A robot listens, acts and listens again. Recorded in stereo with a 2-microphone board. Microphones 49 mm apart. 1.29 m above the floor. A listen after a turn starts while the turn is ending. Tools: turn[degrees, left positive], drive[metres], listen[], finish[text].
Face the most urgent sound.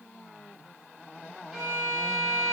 Action: listen[]
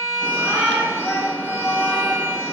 Thought: The shout: about 50° left or 130° left.
Action: turn[50]
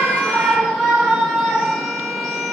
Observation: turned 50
Action: finish[Found it: a shout, straight ahead.]